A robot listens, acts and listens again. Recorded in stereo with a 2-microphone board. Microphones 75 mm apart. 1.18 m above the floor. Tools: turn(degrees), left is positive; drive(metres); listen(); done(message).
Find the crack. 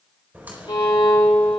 turn(degrees=-25)
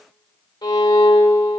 listen()
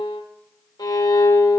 done("I heard a crack, but can't make it out now. It was about straight ahead or 130° right.")